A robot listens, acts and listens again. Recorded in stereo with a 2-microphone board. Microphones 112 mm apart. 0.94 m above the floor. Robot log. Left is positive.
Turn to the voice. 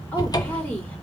cmd yaw +30
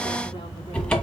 cmd idle
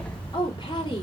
note: So it is at 135° left.
cmd yaw +135
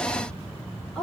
end: Found it: a woman speaking, straight ahead.